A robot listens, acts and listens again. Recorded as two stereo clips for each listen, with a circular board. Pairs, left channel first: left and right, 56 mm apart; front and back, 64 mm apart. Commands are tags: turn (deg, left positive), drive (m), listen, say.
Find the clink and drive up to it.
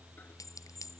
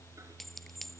<turn deg="85"/>
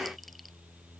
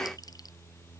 <listen/>
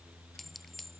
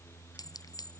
<drive m="1.0"/>
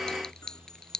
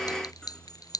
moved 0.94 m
<turn deg="10"/>
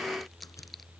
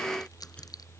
<drive m="1.0"/>
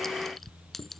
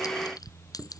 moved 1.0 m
<drive m="1.0"/>
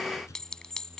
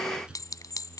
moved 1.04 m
<turn deg="10"/>
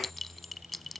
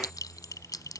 <drive m="1.0"/>
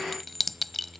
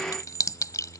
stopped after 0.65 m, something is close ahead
<say>Arrived at the clink, straight ahead.</say>